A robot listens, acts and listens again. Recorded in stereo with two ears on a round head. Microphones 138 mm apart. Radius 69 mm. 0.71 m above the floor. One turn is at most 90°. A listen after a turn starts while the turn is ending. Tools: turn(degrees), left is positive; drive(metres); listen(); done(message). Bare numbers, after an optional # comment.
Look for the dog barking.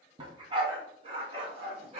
# The dog barking: about 40° right or 140° right.
turn(-40)
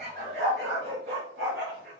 # So it is at 95° right.
turn(-90)
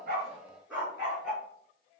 # The dog barking is now 10° right.
turn(-10)
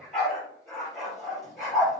done("Facing the dog barking, over 4 m away.")